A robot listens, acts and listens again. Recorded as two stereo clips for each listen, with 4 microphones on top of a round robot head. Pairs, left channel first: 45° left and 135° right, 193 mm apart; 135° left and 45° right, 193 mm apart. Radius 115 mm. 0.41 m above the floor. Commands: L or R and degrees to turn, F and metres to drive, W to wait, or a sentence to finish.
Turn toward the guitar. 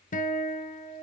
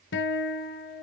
L95
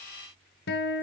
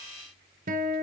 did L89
Facing the guitar, 1 to 2 m away.